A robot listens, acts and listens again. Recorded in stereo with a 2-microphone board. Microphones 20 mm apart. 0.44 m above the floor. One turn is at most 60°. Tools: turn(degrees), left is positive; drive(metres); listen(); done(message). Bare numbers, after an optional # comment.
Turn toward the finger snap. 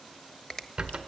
# The finger snap: about 25° left or 155° left.
turn(25)
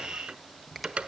listen()
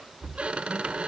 listen()
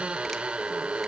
done("I heard a finger snap, but can't make it out now. It was about straight ahead or 130° left.")